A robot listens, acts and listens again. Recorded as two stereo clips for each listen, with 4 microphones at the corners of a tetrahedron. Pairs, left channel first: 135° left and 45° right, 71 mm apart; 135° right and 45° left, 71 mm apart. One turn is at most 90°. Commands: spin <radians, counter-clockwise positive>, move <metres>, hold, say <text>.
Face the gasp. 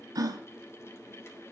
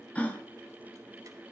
spin -1.13
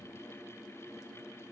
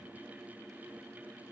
say I heard a gasp from this way, but can't make it out now.